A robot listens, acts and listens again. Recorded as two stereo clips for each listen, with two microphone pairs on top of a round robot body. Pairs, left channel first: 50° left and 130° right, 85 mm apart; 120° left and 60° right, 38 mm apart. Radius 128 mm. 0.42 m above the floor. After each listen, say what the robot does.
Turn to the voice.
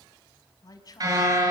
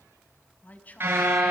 Turn 85° left.
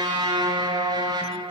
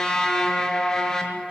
Keep listening.
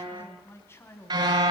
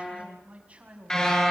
Facing the man speaking.